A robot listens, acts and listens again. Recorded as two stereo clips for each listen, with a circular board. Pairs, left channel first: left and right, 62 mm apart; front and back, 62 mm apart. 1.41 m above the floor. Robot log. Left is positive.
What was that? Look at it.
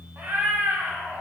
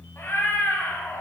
note: The cat meowing: 40° right.
cmd yaw -40
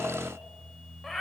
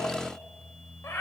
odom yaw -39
end: Found it: a cat meowing, straight ahead.